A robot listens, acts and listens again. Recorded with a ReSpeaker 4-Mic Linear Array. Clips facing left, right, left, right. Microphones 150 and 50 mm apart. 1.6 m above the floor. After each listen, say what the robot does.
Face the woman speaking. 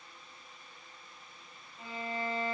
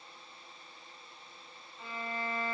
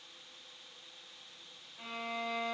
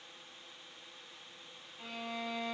Keep listening.
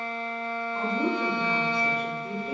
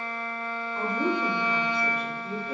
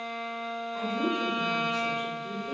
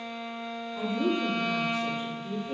Turn 55° left.
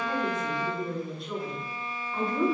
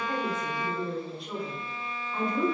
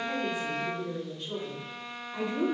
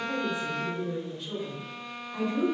Facing the woman speaking, 1 to 2 m away.